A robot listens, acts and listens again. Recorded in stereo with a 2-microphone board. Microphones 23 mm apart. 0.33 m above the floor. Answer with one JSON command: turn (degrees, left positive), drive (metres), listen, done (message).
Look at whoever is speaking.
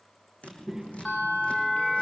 {"turn": -20}
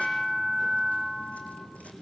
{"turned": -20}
{"turn": 25}
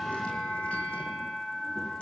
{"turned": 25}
{"listen": true}
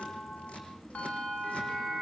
{"turn": 25}
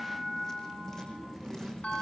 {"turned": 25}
{"turn": -15}
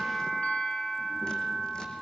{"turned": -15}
{"listen": true}
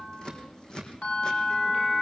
{"done": "Found it: a child speaking, straight ahead."}